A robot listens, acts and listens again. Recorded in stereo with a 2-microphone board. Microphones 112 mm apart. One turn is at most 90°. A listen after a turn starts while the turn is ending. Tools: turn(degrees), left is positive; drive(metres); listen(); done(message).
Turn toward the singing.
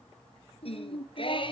turn(degrees=50)
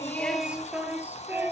turn(degrees=-15)
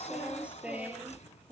turn(degrees=-15)
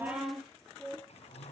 done("Found it: singing, straight ahead.")